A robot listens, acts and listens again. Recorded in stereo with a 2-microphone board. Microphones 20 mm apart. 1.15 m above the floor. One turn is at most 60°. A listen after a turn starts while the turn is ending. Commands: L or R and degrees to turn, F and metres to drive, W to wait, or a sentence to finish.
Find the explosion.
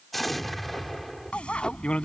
L30
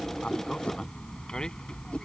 W
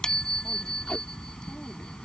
I heard an explosion, but can't make it out now. It was about 30° right or 150° left.